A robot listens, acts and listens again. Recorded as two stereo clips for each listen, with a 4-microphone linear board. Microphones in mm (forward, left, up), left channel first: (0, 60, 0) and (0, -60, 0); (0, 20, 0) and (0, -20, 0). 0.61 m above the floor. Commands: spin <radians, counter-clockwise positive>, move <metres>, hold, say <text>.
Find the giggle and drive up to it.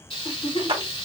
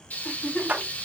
spin 1.05
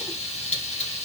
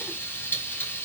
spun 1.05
hold
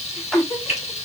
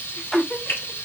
spin 0.52
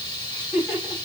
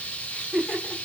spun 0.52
move 1.0
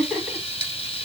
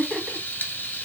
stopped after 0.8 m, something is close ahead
say Arrived at the giggle, straight ahead.